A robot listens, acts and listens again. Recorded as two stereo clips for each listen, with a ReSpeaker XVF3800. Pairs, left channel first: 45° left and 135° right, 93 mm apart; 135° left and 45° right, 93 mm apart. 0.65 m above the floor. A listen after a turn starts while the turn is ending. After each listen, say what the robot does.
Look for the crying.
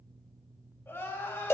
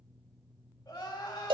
Turn 105° left.
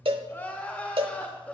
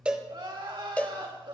Turn 30° right.
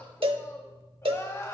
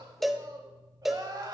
Turn 10° right.
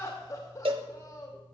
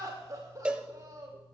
Facing the crying, 2 to 4 m away.